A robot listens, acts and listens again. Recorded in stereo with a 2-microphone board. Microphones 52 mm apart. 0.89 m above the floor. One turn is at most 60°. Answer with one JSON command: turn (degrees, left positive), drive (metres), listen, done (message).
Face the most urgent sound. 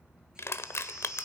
{"turn": -30}
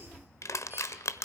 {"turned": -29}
{"listen": true}
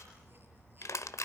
{"listen": true}
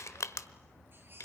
{"done": "I heard a baby crying, but can't make it out now. It was about 15° left or 140° right."}